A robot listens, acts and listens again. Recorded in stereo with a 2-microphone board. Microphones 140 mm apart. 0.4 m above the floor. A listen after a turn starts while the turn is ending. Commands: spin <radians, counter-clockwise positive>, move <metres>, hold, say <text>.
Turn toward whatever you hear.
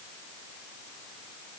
hold
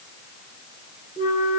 spin 1.57
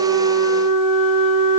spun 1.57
say Facing the flute.